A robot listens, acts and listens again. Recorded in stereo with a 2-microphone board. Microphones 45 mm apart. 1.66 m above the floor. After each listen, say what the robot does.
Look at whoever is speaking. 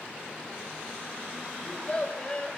Turn 25° left.
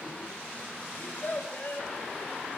Turn 130° left.
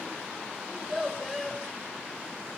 Facing the child speaking.